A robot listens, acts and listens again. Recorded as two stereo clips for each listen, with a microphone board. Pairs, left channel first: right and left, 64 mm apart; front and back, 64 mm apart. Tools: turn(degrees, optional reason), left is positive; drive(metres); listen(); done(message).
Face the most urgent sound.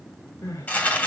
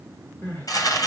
turn(degrees=-60, reason="The crying: 60° right.")
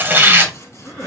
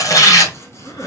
turn(degrees=-10, reason="The crying is now 10° right.")
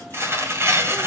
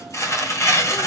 listen()
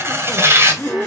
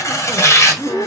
done("Facing the crying.")